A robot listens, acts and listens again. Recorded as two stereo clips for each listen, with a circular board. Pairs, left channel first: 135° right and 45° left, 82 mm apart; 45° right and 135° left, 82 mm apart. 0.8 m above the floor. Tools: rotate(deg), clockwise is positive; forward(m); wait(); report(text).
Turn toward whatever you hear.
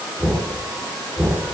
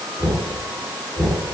rotate(40)
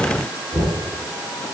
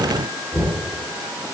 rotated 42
report("Found it: knocking, straight ahead.")